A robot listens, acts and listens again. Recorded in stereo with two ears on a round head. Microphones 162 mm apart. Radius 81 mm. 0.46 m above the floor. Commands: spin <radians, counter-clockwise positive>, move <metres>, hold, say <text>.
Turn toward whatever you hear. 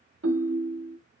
spin -1.57
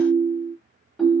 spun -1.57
say Found it: a ringtone, straight ahead, under 1 m away.